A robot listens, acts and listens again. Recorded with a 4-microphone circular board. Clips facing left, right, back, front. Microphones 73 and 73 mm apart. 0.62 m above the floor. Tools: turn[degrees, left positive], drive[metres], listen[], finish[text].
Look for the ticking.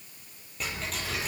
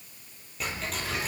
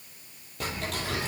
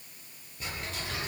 Thought: The ticking: straight behind.
Action: turn[180]
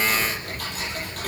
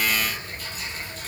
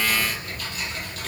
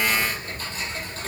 Thought: The ticking is now 60° left.
Action: turn[60]
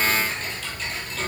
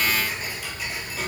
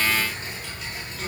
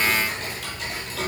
Thought: The ticking is now 10° right.
Action: turn[-10]
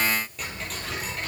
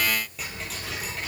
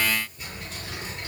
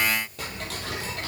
Action: finish[Facing the ticking.]